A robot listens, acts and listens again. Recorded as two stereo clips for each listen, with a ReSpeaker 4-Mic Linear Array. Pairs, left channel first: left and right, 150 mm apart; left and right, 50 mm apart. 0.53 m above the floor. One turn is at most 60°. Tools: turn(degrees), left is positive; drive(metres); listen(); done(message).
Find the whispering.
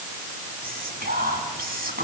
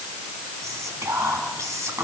turn(degrees=-60)
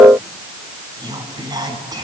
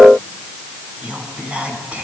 turn(degrees=-25)
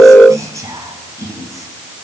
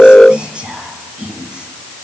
turn(degrees=-20)
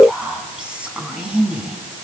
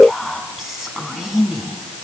done("Facing the whispering, over 4 m away.")